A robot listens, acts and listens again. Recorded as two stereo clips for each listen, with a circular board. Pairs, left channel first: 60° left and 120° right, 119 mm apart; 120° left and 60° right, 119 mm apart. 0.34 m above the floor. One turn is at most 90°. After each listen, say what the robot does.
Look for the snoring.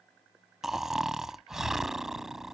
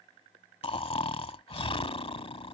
Turn 90° left.
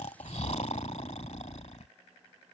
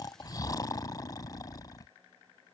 Turn 65° left.
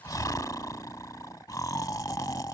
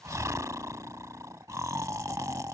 Facing the snoring.